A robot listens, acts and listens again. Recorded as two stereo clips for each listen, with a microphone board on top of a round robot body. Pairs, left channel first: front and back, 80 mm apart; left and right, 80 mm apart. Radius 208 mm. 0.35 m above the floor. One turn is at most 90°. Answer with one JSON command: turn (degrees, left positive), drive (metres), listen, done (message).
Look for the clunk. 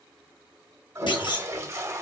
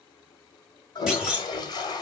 {"turn": -10}
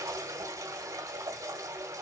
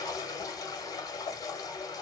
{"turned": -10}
{"done": "I heard a clunk from this way, but can't make it out now."}